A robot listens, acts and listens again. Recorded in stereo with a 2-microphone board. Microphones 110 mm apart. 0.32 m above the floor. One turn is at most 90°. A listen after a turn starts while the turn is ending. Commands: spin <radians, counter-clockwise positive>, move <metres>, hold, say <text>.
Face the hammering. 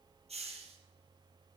hold
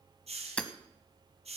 spin 0.52
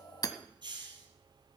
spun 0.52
spin 1.57
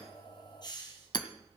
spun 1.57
spin 0.96
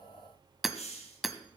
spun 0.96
say Facing the hammering.